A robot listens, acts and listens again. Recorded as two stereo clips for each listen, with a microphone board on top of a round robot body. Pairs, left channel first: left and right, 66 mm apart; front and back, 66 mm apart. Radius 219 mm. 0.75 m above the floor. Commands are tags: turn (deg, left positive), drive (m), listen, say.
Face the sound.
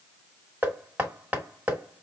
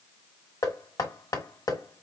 <turn deg="-25"/>
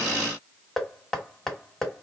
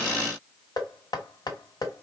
<say>Found it: knocking, straight ahead, 1 to 2 m away.</say>